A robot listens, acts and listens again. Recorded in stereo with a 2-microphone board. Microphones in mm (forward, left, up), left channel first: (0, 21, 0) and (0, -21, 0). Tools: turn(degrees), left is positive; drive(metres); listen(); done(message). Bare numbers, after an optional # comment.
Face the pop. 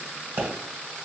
# The pop: about 60° right or 120° right.
turn(-60)
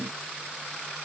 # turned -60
listen()
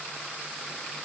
done("I heard a pop, but can't make it out now. It was about straight ahead or 60° right.")